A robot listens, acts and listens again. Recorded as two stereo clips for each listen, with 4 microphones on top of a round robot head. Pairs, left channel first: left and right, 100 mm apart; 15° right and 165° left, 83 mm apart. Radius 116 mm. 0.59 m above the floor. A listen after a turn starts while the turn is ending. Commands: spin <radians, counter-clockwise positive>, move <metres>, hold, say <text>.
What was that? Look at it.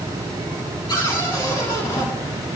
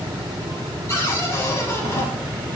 spin 0.79
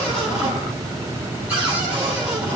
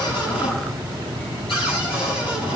spin -0.26
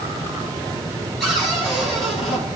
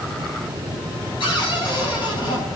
say Facing the cupboard door, over 4 m away.